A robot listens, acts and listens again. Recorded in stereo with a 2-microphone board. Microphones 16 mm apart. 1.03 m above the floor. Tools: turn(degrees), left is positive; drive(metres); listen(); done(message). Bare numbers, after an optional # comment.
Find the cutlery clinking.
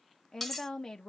turn(30)
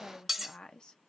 # So it is at 10° right.
turn(-10)
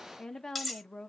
done("Found it: cutlery clinking, straight ahead.")